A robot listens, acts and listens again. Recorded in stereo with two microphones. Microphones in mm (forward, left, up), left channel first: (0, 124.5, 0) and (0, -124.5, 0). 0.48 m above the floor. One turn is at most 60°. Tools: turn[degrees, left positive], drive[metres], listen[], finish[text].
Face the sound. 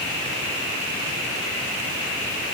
Action: listen[]
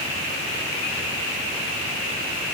Action: listen[]
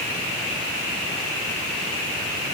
Action: finish[I can't make out anything.]